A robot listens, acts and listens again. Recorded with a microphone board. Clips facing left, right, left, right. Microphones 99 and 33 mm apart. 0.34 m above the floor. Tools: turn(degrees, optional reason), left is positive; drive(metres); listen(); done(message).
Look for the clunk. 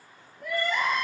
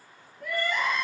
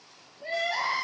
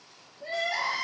listen()
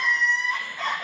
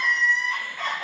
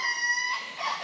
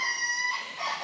listen()
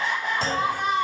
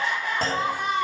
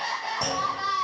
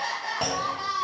turn(degrees=-55, reason="The clunk: about 55° right or 125° right.")
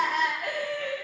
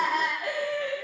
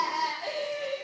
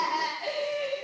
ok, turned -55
listen()
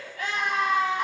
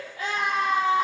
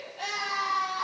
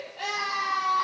done("I heard a clunk, but can't make it out now. It was about straight ahead or 70° right.")